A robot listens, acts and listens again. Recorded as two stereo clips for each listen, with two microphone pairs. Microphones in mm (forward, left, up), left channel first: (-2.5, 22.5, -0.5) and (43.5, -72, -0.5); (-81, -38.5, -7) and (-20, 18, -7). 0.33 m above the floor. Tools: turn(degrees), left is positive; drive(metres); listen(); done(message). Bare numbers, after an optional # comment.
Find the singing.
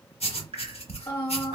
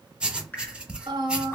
# The singing: 50° left.
turn(50)
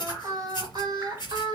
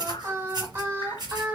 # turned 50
# The singing is now 30° right.
turn(-30)
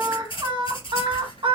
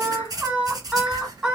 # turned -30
# The singing is now 45° right.
turn(-45)
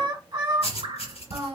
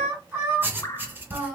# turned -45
# The singing is now 35° right.
turn(-35)
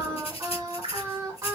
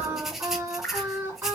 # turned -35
# The singing is now 15° right.
turn(-15)
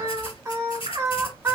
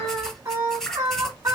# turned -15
done("Facing the singing, 1 to 2 m away.")